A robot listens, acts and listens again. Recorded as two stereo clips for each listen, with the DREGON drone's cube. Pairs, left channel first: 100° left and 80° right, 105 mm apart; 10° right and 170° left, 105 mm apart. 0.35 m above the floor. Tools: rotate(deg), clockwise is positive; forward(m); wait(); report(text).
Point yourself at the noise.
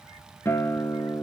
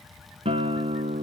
rotate(-165)
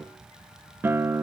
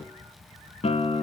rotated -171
report("Facing the guitar.")